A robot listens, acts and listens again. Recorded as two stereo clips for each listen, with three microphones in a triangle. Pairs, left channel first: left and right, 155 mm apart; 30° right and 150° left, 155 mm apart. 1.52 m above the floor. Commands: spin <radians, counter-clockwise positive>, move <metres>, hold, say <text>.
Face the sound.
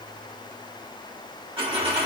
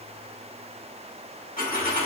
spin -0.70
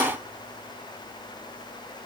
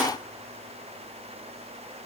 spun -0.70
say I heard a dropped coin from this way, but can't make it out now.